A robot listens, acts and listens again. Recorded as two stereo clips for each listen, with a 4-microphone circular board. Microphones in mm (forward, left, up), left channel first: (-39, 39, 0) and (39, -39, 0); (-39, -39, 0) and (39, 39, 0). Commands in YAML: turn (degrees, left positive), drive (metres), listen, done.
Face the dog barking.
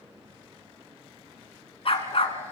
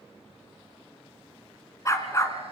turn: 165
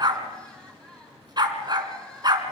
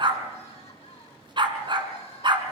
done: "Found it: a dog barking, straight ahead."